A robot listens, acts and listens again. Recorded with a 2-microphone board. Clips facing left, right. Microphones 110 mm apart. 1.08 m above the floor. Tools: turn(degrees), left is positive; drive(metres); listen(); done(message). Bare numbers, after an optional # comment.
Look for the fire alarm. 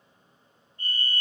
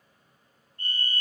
# The fire alarm: about 50° right or 130° right.
turn(-50)
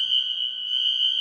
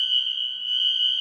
# So it is at 75° right.
turn(-75)
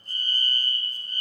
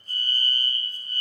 done("Found it: a fire alarm, straight ahead, 2 to 4 m away.")